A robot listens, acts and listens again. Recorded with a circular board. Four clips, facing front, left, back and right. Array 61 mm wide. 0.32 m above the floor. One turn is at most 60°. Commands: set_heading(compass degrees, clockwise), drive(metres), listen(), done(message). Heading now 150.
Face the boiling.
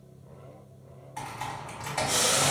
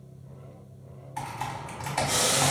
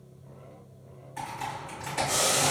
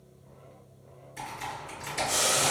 set_heading(110)
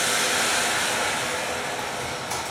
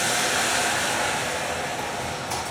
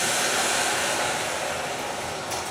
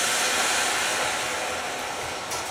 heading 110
done("Found it: boiling, straight ahead, 1 to 2 m away.")